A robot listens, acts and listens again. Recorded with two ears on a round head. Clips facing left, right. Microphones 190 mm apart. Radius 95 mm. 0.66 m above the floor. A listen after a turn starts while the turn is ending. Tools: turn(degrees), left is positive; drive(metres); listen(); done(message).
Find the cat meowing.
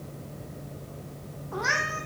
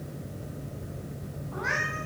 turn(degrees=55)
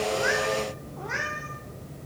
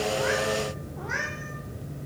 done("Facing the cat meowing.")